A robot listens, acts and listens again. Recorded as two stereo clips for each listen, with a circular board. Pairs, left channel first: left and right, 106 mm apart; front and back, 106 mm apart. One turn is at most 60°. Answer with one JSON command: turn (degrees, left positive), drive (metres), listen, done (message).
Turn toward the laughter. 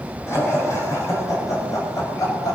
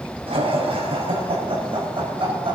{"turn": 60}
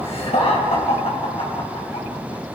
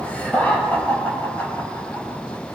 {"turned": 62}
{"turn": 60}
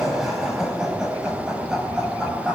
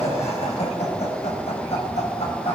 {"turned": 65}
{"done": "Facing the laughter, over 4 m away."}